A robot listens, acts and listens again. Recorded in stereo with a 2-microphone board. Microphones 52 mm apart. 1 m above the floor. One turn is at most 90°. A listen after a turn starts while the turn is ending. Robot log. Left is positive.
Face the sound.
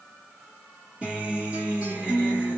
note: The guitar: about 20° right or 160° right.
cmd yaw -20
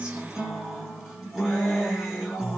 end: Found it: a guitar, straight ahead, 2 to 4 m away.